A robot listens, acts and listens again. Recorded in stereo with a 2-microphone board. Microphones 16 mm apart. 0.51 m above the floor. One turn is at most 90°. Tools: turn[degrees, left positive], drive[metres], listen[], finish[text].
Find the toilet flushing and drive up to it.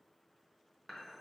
Action: listen[]
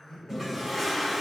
Thought: The toilet flushing: about 15° right or 165° right.
Action: turn[-15]
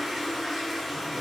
Thought: So it is at 155° right.
Action: turn[-90]
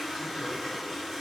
Thought: The toilet flushing is now 70° right.
Action: turn[-70]
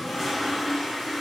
Thought: The toilet flushing is now 15° left.
Action: turn[15]
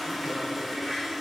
Action: drive[1.0]
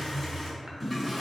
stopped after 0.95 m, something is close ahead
Action: finish[I am next to the toilet flushing.]